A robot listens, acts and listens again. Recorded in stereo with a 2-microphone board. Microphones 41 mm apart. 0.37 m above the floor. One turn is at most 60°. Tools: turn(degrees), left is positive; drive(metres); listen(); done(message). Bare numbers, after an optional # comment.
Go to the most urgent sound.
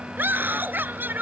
# The scream: about 50° right or 130° right.
turn(-50)
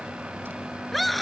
drive(1.0)
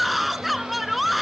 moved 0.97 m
drive(1.0)
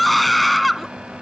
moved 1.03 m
drive(1.0)
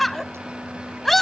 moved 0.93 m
drive(1.0)
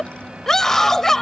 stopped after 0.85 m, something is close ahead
# The scream is now 15° left.
turn(15)
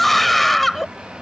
done("I am next to the scream.")